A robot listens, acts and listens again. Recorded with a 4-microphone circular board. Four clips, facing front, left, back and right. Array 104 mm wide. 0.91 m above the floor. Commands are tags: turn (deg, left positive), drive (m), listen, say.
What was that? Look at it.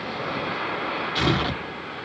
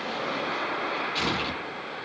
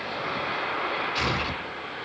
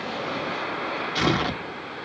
<turn deg="-55"/>
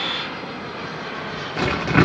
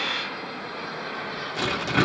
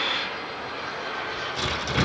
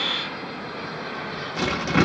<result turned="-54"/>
<say>Found it: tearing paper, straight ahead.</say>